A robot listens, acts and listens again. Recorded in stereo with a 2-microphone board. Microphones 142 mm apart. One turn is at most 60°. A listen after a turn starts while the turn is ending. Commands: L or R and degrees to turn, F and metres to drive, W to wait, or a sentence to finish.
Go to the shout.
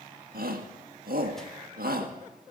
R60
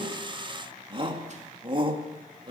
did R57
R35
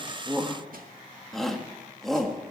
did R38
F1.0
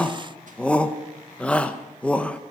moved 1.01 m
L10
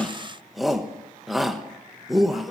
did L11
F1.0
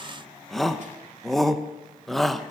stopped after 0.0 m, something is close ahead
Arrived at the shout, straight ahead.